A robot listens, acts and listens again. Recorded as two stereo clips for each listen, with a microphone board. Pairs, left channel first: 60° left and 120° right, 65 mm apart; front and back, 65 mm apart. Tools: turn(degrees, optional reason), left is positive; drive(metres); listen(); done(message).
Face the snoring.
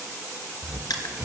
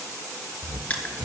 turn(degrees=-160, reason="The snoring: 160° right.")
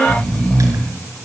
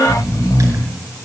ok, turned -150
turn(degrees=-10, reason="The snoring is now 10° right.")
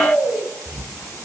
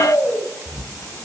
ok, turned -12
done("Facing the snoring.")